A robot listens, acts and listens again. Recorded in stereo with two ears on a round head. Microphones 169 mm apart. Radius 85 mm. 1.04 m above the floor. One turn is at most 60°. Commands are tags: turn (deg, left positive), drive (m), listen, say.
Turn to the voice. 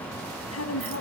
<turn deg="60"/>
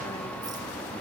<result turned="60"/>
<turn deg="30"/>
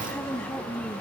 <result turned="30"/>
<say>Facing the woman speaking, 2 to 4 m away.</say>